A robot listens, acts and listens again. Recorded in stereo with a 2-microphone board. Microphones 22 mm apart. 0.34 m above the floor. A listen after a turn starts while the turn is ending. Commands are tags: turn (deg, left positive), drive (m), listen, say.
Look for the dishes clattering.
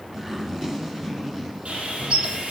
<turn deg="-65"/>
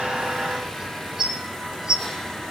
<turn deg="-40"/>
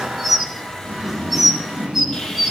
<turn deg="-10"/>
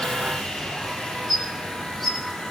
<say>Found it: dishes clattering, straight ahead, 1 to 2 m away.</say>